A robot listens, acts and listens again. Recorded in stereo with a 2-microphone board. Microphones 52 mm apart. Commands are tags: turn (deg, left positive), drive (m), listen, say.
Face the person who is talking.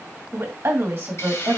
<turn deg="-50"/>
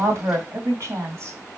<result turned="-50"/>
<turn deg="-70"/>
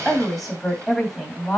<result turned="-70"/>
<say>Found it: a woman speaking, straight ahead.</say>